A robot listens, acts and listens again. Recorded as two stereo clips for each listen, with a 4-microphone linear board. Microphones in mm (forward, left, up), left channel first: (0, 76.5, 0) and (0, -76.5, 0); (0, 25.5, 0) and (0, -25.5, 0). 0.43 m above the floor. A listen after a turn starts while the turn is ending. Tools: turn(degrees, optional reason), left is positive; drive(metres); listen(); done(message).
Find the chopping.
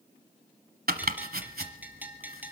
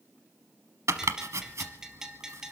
turn(degrees=-90)
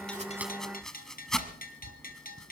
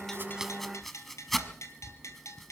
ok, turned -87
done("Facing the chopping.")